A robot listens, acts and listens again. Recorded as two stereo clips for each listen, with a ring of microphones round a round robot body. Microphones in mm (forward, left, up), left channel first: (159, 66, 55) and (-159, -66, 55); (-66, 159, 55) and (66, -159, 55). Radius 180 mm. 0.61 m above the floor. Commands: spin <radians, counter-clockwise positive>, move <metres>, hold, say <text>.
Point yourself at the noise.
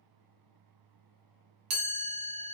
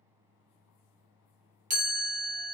spin -2.36
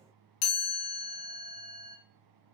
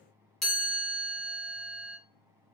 spin 0.44
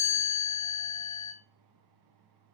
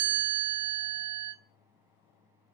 say Found it: a chime, straight ahead, 1 to 2 m away.